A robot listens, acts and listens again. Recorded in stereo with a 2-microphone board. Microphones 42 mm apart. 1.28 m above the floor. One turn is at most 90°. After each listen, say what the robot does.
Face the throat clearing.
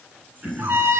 Turn 35° right.
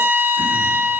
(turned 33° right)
Keep listening.
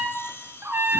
Keep listening.
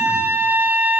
I heard throat clearing, but can't make it out now. It was about straight ahead or 110° right.